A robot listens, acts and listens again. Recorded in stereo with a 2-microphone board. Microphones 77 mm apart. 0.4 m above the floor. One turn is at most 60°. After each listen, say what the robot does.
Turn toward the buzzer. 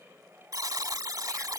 Turn 50° right.
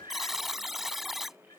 Facing the buzzer.